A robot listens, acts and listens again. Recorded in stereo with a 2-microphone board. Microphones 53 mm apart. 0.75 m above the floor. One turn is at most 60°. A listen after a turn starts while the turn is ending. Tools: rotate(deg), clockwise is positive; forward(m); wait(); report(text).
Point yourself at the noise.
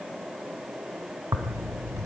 rotate(60)
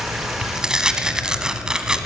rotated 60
rotate(15)
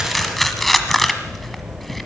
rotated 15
report("Found it: tearing paper, straight ahead, 1 to 2 m away.")